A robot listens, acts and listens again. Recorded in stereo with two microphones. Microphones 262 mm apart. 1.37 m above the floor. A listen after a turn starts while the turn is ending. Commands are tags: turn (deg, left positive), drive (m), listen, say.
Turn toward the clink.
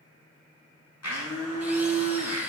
<listen/>
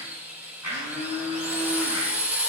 <listen/>
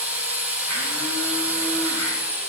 <say>I can't make out a clink, only a blender and a drill.</say>